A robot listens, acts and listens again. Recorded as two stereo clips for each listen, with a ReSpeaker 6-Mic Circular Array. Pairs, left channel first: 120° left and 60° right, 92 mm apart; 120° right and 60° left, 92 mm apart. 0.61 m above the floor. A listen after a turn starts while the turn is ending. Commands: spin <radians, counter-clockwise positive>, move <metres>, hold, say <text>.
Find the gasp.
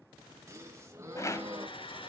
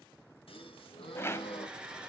spin -2.09
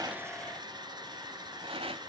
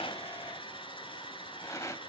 say I heard a gasp from this way, but can't make it out now.